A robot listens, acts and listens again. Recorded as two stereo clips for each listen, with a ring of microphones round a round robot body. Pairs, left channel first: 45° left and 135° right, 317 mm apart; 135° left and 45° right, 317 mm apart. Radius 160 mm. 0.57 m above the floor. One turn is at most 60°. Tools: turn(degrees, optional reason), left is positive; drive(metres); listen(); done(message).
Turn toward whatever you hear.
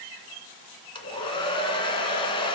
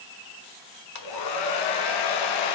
turn(degrees=60, reason="The hair dryer: 120° left.")
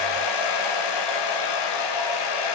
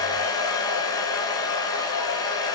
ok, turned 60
turn(degrees=55, reason="The hair dryer is now 55° left.")
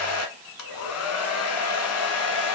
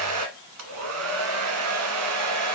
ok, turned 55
done("Facing the hair dryer, 1 to 2 m away.")